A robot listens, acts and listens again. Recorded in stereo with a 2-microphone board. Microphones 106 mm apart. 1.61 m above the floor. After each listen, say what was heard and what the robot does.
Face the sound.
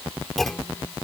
Turn 30° left.
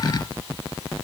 Keep listening.
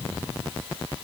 I heard a clunk, but can't make it out now. It was about 25° right or 145° left.